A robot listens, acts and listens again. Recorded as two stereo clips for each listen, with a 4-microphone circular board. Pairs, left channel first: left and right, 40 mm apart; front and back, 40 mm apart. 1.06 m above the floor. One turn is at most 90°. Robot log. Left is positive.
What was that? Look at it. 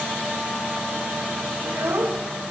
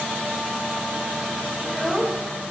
note: The child speaking: 90° right.
cmd yaw -90
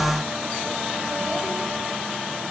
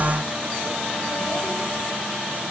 cmd idle
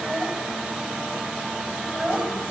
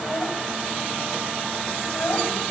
note: The child speaking is now 20° right.
cmd yaw -20
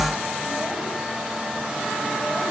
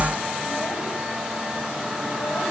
cmd idle
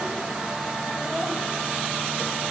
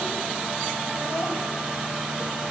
cmd idle
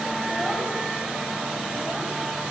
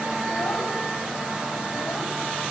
end: Facing where the child speaking came from. I can't hear it now.